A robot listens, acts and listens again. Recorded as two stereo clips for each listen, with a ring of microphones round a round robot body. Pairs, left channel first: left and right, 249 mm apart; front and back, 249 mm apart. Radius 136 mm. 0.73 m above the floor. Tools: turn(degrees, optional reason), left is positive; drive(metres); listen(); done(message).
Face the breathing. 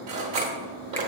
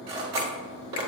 listen()
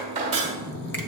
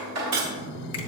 turn(degrees=135, reason="The breathing: 135° left.")
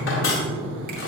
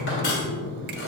turn(degrees=-20, reason="The breathing is now 20° right.")
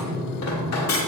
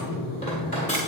done("Facing the breathing, 1 to 2 m away.")